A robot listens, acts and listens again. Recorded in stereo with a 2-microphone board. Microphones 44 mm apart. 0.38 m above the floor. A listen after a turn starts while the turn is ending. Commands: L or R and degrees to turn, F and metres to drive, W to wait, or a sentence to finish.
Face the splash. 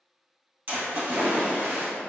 R40
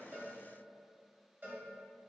W
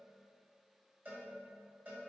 I heard a splash, but can't make it out now. It was about straight ahead or 100° right.